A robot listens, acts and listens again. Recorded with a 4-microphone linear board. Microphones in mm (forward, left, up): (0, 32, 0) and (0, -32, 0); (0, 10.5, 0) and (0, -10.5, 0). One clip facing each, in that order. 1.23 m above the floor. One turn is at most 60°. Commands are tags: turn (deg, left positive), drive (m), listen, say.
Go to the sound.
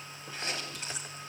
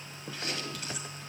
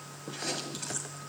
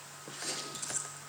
<turn deg="30"/>
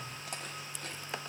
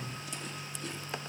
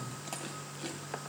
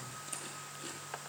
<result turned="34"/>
<turn deg="60"/>
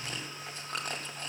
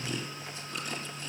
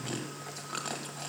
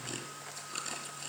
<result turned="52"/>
<turn deg="60"/>
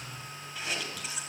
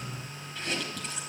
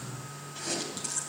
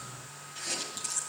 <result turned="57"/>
<drive m="1.0"/>
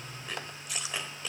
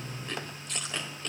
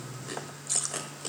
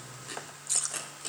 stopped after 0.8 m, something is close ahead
<turn deg="10"/>
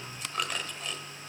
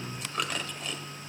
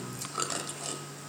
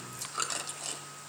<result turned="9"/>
<say>Arrived at the chewing, straight ahead.</say>